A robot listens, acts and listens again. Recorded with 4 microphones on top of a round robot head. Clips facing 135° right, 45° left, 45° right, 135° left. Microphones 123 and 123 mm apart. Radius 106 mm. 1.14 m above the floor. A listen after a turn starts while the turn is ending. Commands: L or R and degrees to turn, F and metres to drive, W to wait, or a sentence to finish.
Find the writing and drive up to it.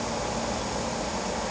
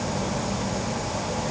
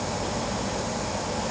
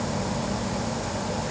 W
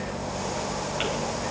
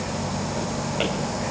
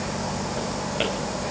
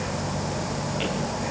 W
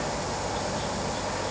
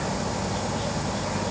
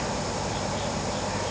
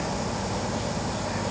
I can't make out writing.